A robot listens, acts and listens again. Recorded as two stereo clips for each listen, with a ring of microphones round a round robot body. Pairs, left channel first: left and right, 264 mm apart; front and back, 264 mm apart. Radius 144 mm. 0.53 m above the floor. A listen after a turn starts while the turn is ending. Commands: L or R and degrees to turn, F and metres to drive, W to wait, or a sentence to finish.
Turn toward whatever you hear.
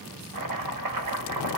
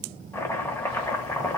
R80
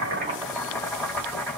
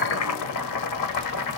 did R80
Found it: chopping, straight ahead.